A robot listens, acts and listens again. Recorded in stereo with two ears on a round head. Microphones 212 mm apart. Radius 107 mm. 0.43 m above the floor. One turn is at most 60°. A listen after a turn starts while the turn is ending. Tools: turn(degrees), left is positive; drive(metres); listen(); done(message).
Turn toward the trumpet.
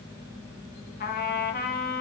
turn(degrees=40)
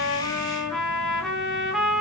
done("Facing the trumpet, under 1 m away.")